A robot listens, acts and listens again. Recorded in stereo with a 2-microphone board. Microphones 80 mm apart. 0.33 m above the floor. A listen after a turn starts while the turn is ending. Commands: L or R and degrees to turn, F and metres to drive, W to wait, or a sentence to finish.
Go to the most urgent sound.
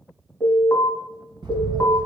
L30
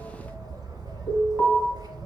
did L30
F1.0
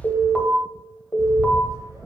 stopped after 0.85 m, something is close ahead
L10
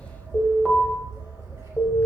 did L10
I am next to the alarm.